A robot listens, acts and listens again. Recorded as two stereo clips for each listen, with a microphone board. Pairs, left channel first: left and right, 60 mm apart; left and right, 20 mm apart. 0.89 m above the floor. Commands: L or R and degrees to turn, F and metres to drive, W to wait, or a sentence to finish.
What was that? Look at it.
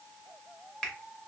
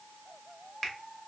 L30
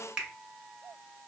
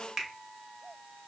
R15
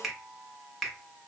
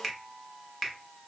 Found it: a finger snap, straight ahead.